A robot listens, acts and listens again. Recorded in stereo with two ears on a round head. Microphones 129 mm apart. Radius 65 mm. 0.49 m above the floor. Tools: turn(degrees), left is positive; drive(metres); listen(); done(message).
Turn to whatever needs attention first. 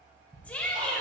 turn(degrees=30)
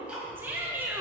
turn(degrees=-15)
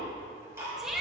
done("Found it: a shout, straight ahead, 1 to 2 m away.")